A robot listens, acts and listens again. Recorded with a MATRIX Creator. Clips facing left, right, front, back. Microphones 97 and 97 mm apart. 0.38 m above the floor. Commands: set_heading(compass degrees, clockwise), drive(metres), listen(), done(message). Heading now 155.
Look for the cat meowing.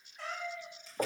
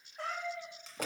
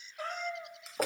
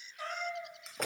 set_heading(205)
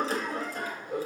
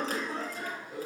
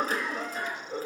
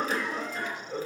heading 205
listen()
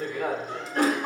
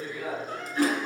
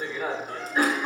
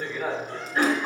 listen()
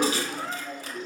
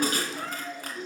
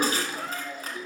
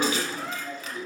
set_heading(260)
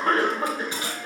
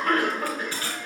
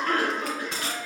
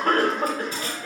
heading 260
listen()
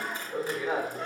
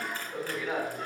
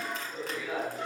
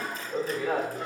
listen()
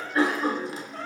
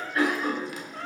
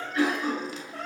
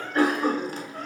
set_heading(270)
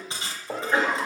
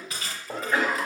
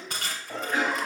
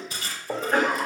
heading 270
listen()
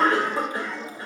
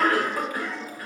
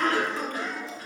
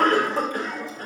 listen()
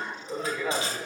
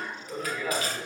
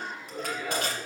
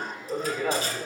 done("I heard a cat meowing from this way, but can't make it out now.")